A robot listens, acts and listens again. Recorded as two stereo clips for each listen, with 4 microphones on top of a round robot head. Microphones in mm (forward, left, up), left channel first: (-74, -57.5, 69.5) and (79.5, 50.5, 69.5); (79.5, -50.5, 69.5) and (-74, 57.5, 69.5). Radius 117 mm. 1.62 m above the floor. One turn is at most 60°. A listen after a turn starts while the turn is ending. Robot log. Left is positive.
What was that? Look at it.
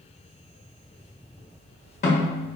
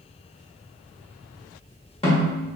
note: The snare drum: 95° right.
cmd yaw -60
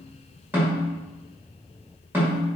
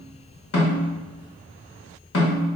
note: The snare drum is now 45° right.
cmd yaw -45
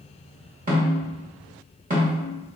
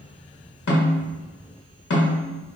note: The snare drum is now 10° right.
cmd yaw -10
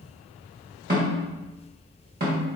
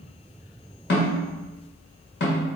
end: Facing the snare drum, 1 to 2 m away.